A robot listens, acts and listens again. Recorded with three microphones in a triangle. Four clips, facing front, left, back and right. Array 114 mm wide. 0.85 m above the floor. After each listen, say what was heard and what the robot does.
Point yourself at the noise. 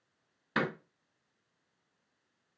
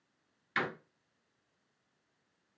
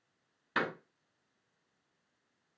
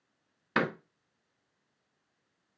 The door slam: 90° right. Turn 90° right.
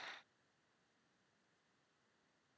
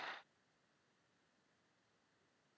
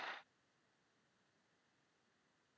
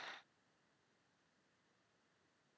I heard a door slam from this way, but can't make it out now.